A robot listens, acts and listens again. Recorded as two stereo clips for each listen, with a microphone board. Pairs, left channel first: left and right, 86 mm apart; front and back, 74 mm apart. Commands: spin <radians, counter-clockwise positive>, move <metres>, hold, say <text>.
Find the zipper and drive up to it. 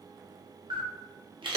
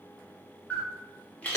hold
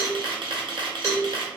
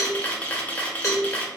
hold
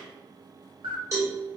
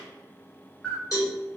say I can't make out a zipper, only a cowbell and a camera shutter.